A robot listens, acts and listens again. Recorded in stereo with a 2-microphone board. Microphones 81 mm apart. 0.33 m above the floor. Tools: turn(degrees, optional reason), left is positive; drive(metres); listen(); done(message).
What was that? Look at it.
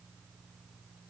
listen()
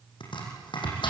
turn(degrees=90)
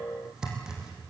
done("Facing the chopping, over 4 m away.")